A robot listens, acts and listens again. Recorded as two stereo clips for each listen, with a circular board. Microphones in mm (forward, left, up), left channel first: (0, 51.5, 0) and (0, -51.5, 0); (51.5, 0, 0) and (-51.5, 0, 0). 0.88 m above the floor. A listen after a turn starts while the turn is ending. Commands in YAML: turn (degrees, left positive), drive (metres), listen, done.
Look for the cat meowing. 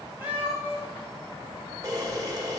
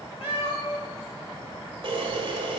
turn: -15
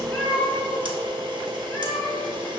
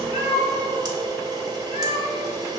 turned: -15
turn: 25
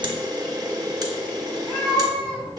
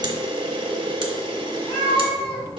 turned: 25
turn: 20
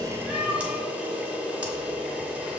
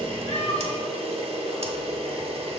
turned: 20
done: "Facing the cat meowing, 2 to 4 m away."